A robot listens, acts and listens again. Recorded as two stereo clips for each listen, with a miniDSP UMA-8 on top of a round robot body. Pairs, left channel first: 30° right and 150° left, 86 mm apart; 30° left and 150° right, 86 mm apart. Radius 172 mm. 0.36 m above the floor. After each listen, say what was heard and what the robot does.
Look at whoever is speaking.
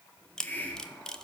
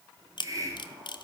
Keep listening.
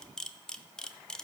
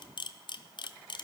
Keep listening.
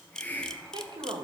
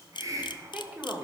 The woman speaking: 140° left. Turn 140° left.
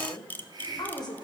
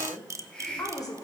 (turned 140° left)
The woman speaking is now 10° right. Turn 10° right.
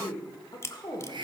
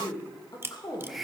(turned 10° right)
Facing the woman speaking.